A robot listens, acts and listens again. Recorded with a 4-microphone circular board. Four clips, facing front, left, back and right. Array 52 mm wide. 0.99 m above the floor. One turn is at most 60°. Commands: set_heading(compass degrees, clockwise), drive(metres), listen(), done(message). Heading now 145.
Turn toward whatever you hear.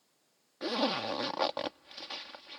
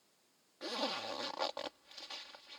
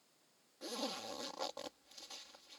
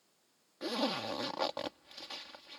done("Facing the zipper.")